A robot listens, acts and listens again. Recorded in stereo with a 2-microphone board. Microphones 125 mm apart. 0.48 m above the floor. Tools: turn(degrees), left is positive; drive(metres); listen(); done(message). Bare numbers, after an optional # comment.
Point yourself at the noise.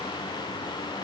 listen()
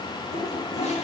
# The toilet flushing: about 70° left or 110° left.
turn(70)
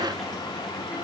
listen()
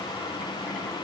listen()
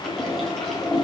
done("Found it: a toilet flushing, straight ahead, 2 to 4 m away.")